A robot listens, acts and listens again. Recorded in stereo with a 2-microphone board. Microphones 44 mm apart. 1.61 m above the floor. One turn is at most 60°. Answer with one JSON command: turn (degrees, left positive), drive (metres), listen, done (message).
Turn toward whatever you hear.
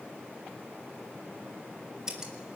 {"turn": -15}
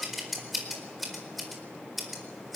{"done": "Facing the scissors, over 4 m away."}